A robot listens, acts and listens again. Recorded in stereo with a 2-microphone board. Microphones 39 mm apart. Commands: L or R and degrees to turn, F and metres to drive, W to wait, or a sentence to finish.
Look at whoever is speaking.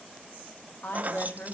L60
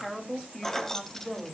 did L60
L15
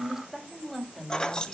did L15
Facing the woman speaking, 2 to 4 m away.